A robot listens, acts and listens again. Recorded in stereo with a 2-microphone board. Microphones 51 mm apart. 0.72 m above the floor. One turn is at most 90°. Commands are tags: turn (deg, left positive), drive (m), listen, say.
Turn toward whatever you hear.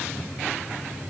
<listen/>
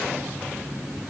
<listen/>
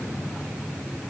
<say>I can't make out anything to turn to.</say>